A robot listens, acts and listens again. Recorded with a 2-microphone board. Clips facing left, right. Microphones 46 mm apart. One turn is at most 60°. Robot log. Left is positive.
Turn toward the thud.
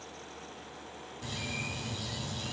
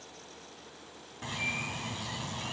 cmd idle
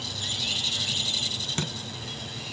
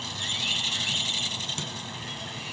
note: The thud: about 50° left or 130° left.
cmd yaw +50
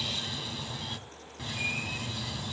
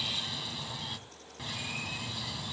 cmd idle
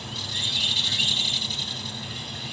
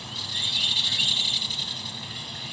end: I heard a thud, but can't make it out now. It was about straight ahead or 80° left.